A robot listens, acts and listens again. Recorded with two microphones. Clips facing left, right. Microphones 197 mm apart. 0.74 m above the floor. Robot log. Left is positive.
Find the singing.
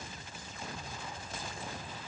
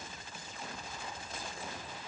cmd idle
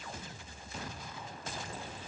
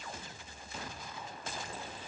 cmd idle
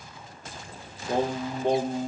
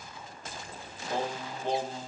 note: The singing: about 65° left or 115° left.
cmd yaw +65
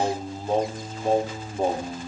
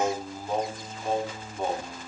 note: So it is at 35° left.
cmd yaw +35
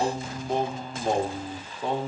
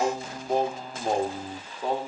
end: Facing the singing.